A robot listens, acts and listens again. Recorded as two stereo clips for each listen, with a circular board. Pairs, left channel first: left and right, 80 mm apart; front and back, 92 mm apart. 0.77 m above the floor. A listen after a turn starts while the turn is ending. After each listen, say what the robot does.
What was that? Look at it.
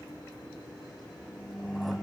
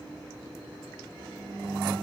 Keep listening.
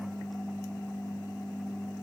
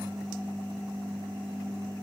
Keep listening.
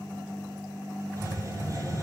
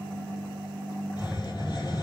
Turn 40° right.
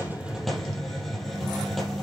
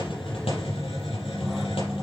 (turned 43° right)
Found it: a hiss, straight ahead, over 4 m away.